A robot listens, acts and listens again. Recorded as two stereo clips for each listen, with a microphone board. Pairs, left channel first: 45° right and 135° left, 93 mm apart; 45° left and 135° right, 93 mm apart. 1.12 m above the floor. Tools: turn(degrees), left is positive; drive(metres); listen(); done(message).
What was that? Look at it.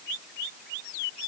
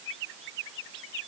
listen()
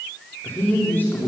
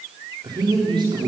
turn(degrees=-115)
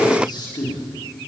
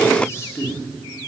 turn(degrees=-15)
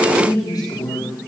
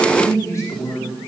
turn(degrees=-10)
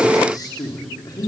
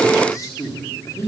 turn(degrees=-10)
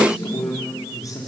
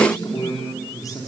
done("Found it: a man speaking, straight ahead, 2 to 4 m away.")